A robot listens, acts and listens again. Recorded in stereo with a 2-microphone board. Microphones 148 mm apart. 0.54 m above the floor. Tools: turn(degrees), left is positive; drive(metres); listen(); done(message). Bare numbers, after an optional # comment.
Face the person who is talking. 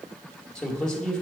turn(30)
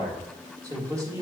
# So it is at 25° right.
turn(-25)
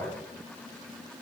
# The man speaking is now 10° left.
turn(10)
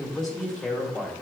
done("Found it: a man speaking, straight ahead, 1 to 2 m away.")